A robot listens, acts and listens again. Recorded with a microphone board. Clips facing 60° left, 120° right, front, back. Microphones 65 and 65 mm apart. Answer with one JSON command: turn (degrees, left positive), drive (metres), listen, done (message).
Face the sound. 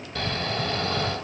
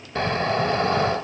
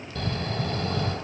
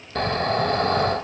{"turn": 180}
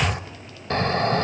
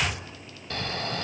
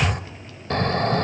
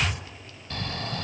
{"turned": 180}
{"turn": 20}
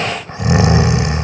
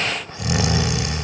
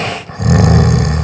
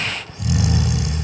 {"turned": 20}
{"done": "Found it: snoring, straight ahead, under 1 m away."}